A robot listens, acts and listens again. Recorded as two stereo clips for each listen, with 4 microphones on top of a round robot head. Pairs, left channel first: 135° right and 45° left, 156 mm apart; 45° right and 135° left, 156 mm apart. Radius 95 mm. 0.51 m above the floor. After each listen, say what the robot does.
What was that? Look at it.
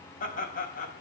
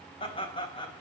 Turn 105° right.
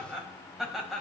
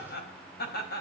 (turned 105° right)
Turn 45° right.
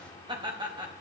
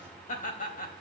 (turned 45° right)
Turn 15° right.
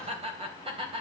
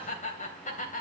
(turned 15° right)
Turn 10° right.
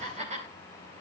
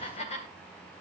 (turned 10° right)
Facing the laughter, 2 to 4 m away.